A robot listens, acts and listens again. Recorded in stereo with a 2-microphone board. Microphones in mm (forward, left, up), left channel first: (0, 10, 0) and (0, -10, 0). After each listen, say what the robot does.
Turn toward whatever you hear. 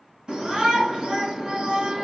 Turn 55° right.
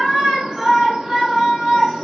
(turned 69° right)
Turn 55° right.
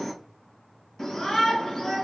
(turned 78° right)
Turn 25° left.
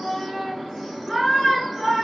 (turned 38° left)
Turn 15° right.
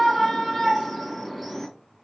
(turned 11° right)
Facing the shout.